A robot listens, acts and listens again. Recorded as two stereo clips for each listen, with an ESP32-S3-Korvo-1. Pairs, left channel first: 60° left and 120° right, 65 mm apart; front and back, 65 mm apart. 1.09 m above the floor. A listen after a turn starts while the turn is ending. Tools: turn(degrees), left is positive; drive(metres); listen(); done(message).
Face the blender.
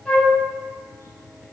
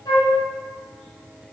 listen()
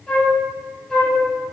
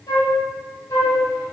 listen()
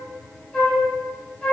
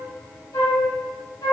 done("I can't make out a blender, only a flute.")